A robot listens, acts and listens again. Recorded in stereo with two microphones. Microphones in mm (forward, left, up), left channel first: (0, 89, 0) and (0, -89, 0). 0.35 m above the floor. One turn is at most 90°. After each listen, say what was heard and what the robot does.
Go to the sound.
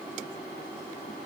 Keep listening.
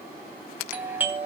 Turn 30° right.
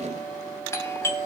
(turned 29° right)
So it is at 20° left. Turn 20° left.
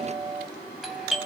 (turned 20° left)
Drive 1.0 m forward.
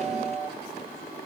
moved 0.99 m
The doorbell is now 15° right. Turn 15° right.
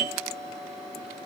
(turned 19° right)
Drive 1.0 m forward.
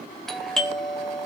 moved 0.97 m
Drive 1.0 m forward.
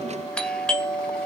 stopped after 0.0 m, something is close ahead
The doorbell is now 10° left. Turn 10° left.
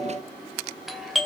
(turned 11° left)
Arrived at the doorbell, straight ahead.